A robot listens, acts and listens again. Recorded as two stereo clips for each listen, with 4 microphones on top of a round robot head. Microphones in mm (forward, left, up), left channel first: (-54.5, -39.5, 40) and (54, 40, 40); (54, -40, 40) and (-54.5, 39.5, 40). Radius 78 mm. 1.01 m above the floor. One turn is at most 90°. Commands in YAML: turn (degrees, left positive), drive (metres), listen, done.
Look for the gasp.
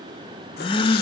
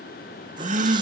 turn: 90
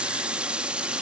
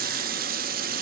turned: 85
turn: 80
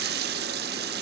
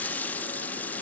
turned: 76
done: "Facing where the gasp came from. I can't hear it now."